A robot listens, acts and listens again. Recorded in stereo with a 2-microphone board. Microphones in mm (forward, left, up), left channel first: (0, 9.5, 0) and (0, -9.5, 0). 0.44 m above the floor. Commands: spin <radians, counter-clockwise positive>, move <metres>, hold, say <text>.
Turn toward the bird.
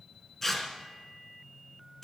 hold
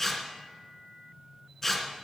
hold
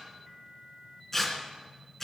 say I can't make out a bird, only tearing paper.